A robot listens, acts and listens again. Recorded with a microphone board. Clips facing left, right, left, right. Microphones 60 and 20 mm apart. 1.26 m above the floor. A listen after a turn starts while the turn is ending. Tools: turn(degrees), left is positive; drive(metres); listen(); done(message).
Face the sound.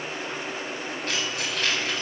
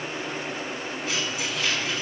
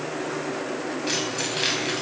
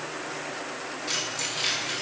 turn(degrees=60)
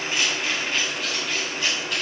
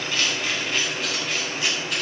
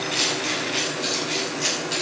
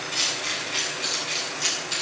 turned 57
done("Found it: keys jangling, straight ahead.")